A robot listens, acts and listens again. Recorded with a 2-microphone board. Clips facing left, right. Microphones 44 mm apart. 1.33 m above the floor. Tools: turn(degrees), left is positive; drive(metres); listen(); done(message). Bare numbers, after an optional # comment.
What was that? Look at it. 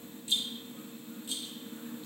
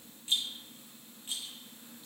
# The rattle: about 35° right or 145° right.
turn(-35)
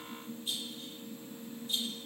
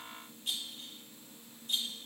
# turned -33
# So it is at 110° right.
turn(-110)
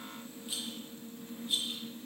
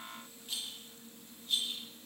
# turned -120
# The rattle is now 10° left.
turn(10)
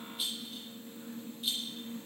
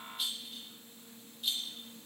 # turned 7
done("Found it: a rattle, straight ahead.")